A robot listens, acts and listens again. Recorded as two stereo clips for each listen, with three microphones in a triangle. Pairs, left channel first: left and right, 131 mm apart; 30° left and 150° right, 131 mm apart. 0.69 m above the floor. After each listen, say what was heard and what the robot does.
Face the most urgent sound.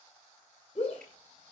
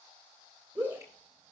The shout: 135° left. Turn 135° left.
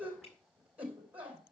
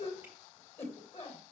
The shout is now 10° right. Turn 10° right.
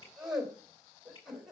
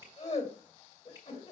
Found it: a shout, straight ahead, 2 to 4 m away.